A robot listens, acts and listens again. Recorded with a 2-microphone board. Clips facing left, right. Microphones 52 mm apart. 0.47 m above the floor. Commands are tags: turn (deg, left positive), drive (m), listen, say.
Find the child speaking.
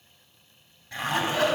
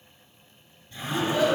<turn deg="-30"/>
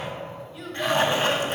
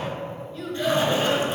<turn deg="30"/>
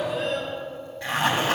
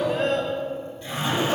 <turn deg="-45"/>
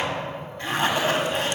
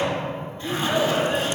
<turn deg="-40"/>
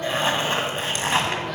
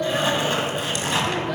<turn deg="-10"/>
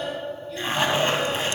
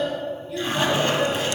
<say>Found it: a child speaking, straight ahead, 2 to 4 m away.</say>